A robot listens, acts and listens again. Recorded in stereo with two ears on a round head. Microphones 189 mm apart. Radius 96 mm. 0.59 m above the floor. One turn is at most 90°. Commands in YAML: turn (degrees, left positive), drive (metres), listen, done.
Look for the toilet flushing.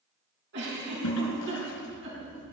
turn: 90
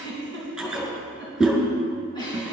done: "Found it: a toilet flushing, straight ahead."